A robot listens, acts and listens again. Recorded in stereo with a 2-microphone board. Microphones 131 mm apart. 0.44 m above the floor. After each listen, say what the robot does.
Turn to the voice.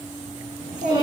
Turn 70° right.
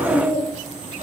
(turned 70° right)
Turn 40° right.
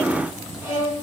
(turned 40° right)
Keep listening.
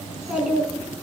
Turn 10° right.
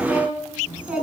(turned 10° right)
Turn 10° right.
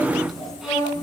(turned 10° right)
Found it: a child speaking, straight ahead.